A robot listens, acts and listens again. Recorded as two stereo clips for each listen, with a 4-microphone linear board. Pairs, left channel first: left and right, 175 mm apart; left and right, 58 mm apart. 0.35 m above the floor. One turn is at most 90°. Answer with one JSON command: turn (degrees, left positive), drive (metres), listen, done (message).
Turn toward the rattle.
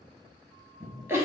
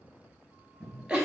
{"listen": true}
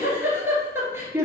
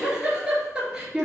{"listen": true}
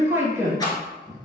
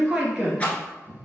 {"turn": 20}
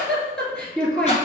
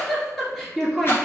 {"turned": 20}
{"listen": true}
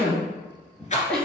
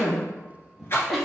{"turn": 90}
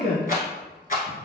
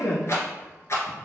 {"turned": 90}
{"turn": 50}
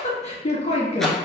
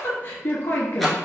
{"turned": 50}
{"listen": true}
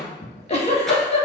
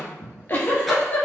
{"listen": true}
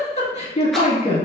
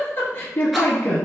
{"done": "Facing where the rattle came from. I can't hear it now."}